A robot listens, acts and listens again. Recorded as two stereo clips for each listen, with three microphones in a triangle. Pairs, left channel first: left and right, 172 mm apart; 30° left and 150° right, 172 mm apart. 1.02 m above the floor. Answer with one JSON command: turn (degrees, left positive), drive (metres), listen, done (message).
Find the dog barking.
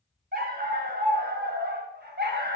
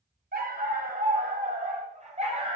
{"turn": -95}
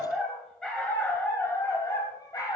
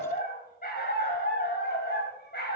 {"turn": 25}
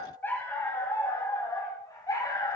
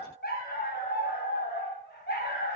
{"turn": 20}
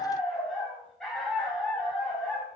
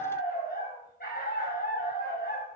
{"done": "Found it: a dog barking, straight ahead."}